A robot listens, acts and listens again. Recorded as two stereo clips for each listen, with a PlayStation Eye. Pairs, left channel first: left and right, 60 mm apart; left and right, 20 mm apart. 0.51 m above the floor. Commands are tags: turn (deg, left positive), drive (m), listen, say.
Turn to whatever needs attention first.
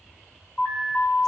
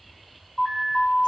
<turn deg="30"/>
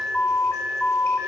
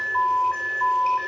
<turn deg="110"/>
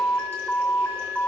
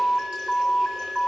<turn deg="15"/>
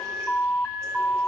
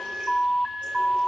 <say>Facing the alarm, 2 to 4 m away.</say>